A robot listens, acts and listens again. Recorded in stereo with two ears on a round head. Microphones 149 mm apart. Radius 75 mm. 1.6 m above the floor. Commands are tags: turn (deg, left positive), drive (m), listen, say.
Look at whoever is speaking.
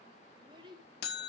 <turn deg="-30"/>
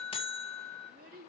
<turn deg="-115"/>
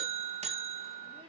<listen/>
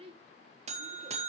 <turn deg="-35"/>
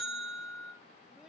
<listen/>
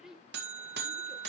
<say>Found it: a child speaking, straight ahead, 2 to 4 m away.</say>